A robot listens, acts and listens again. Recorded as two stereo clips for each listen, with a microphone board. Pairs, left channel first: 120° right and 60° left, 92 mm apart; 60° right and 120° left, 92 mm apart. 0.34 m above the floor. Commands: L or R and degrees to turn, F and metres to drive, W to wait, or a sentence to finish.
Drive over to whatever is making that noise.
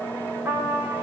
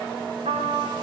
L125
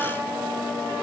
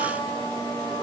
R15
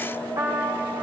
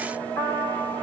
F1.0
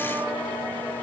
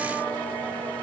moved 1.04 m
W
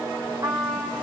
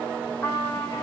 F1.0
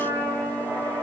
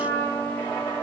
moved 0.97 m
F1.0
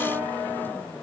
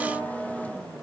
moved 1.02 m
W
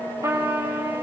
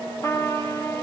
F1.0
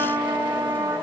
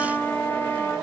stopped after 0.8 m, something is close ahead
I am next to the trumpet.